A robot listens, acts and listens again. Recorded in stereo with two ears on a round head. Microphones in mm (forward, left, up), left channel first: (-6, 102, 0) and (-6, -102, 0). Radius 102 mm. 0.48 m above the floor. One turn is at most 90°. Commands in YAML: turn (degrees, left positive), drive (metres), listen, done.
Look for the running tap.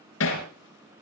listen: true
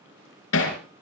listen: true
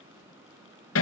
done: "I can't make out a running tap to turn to."